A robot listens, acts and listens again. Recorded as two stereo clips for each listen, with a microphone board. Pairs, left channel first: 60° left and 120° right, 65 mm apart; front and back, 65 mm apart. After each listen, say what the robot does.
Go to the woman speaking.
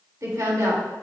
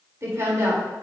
Turn 145° right.
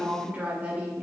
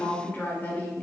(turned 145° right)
Turn 60° right.
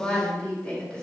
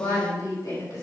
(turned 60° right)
Turn 10° right.
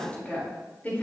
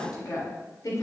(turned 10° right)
Drive 1.0 m forward.
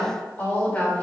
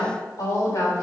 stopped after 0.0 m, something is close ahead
Blocked. The woman speaking is further on, straight ahead.